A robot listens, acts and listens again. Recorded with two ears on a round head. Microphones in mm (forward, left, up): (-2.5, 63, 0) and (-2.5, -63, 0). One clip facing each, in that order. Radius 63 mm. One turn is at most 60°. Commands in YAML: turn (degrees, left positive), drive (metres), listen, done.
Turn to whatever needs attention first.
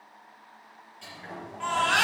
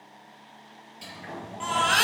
turn: -55
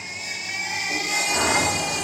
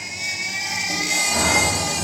turn: -60
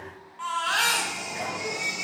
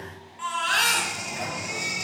turn: -15
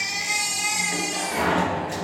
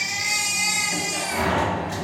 done: "Found it: a baby crying, straight ahead."